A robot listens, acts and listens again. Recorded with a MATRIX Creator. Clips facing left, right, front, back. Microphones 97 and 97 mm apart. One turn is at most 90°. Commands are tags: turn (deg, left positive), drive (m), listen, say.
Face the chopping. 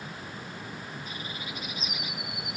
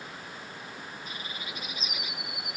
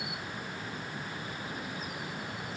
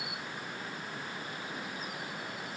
<listen/>
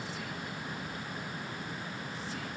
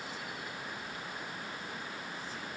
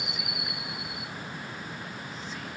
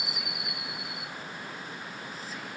<listen/>
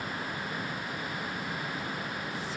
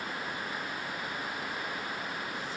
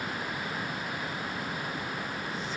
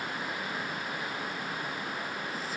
<say>I can't make out chopping to turn to.</say>